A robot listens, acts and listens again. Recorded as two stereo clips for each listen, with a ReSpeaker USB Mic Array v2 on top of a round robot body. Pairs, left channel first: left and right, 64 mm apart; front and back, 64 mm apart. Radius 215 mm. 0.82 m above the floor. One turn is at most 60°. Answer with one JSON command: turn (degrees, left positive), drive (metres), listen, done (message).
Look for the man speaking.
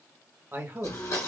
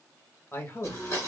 {"turn": -40}
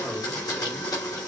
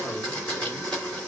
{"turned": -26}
{"turn": -15}
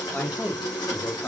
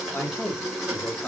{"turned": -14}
{"turn": 55}
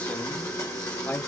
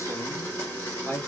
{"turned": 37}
{"turn": 45}
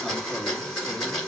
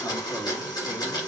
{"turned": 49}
{"listen": true}
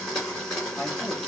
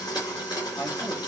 {"listen": true}
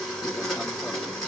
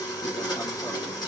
{"done": "I heard a man speaking from this way, but can't make it out now."}